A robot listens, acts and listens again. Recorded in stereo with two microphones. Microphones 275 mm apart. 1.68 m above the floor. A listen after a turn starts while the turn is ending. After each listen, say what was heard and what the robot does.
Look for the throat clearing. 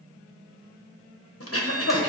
The throat clearing: about 55° left or 125° left. Turn 55° left.
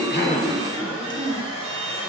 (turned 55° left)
So it is at 20° left. Turn 20° left.
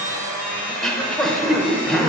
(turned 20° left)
Found it: throat clearing, straight ahead, under 1 m away.